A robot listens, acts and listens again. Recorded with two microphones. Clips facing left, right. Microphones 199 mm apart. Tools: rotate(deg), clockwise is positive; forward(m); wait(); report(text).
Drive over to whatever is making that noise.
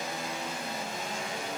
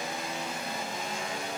wait()
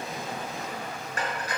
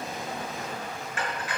rotate(-40)
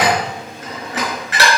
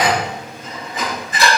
rotate(-95)
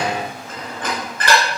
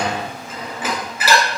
forward(1.0)
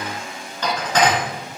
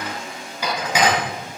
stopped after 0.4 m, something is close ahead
rotate(10)
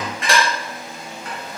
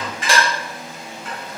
report("Blocked. The dishes clattering is further on, straight ahead.")